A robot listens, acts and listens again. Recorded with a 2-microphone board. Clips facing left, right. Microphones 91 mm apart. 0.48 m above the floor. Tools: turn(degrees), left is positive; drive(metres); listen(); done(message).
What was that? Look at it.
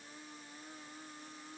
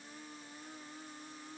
listen()
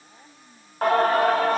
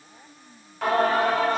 turn(degrees=50)
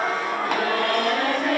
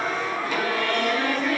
turn(degrees=80)
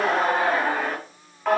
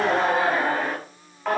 done("Facing the singing, 2 to 4 m away.")